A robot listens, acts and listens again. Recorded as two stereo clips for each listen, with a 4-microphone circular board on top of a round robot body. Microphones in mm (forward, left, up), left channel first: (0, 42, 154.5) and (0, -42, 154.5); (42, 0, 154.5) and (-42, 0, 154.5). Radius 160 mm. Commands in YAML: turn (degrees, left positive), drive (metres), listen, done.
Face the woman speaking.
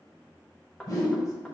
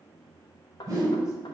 listen: true
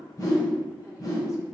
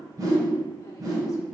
listen: true
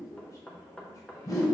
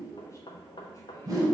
done: "I can't make out a woman speaking, only a whoosh and knocking."